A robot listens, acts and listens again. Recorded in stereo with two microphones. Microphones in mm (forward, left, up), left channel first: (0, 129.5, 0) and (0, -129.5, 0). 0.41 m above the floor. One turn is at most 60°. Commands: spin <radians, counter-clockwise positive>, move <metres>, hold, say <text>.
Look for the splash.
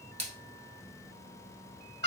spin -1.05
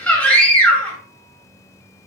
spin -0.52
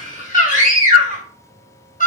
say I heard a splash from this way, but can't make it out now.